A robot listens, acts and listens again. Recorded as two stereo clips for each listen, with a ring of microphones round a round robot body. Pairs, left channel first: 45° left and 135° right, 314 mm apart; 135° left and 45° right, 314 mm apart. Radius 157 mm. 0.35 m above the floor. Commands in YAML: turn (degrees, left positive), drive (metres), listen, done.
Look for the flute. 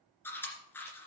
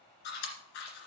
listen: true
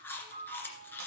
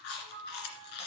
turn: -70
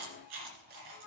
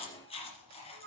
turn: 10
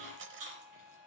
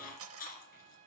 done: "Facing the flute, 1 to 2 m away."